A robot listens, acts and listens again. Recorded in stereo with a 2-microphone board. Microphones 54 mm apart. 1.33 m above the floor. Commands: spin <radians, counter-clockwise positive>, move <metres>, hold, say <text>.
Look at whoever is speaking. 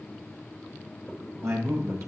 spin -1.05
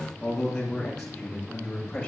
spin 0.17
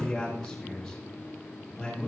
say Facing the man speaking.